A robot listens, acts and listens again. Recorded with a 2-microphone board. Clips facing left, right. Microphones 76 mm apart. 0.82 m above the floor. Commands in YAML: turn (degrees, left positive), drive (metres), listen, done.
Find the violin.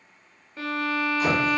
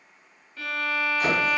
turn: 25
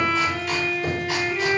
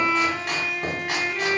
done: "Facing the violin, under 1 m away."